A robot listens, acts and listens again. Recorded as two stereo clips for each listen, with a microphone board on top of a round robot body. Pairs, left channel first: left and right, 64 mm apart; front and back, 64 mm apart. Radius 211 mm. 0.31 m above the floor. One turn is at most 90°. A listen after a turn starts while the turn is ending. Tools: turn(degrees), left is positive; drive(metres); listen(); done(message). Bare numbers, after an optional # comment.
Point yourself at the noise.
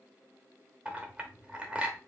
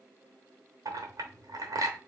# The clink: 160° right.
turn(-90)
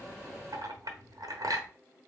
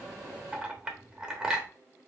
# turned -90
# The clink is now 105° right.
turn(-90)
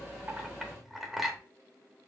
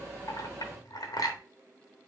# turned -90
done("Facing the clink, 1 to 2 m away.")